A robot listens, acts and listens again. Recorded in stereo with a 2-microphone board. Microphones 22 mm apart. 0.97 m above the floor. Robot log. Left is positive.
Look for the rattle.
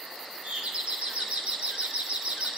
cmd idle
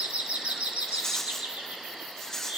note: The rattle: about 25° left or 155° left.
cmd yaw +25
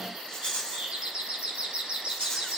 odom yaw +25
note: So it is at 130° left.
cmd yaw +130
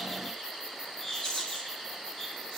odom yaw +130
note: The rattle is now 35° left.
cmd yaw +35
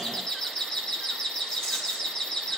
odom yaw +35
cmd idle
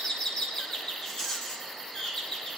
note: The rattle is now 20° left.
cmd yaw +20
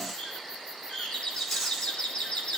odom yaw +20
note: The rattle is now 10° left.
cmd yaw +10
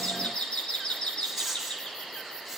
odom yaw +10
end: Facing the rattle, over 4 m away.